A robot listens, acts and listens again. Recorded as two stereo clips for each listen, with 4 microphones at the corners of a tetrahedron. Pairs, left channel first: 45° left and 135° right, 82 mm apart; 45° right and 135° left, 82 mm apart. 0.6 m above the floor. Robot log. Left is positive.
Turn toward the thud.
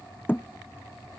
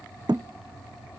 note: The thud: 110° left.
cmd yaw +110
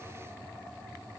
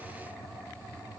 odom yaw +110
end: I heard a thud from this way, but can't make it out now.